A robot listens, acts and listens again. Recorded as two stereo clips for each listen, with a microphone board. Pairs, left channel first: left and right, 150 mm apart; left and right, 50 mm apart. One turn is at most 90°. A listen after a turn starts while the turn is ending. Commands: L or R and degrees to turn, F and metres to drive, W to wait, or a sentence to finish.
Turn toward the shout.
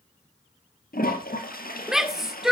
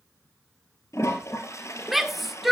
R30
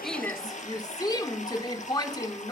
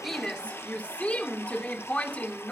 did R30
L25
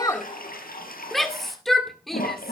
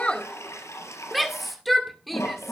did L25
Facing the shout.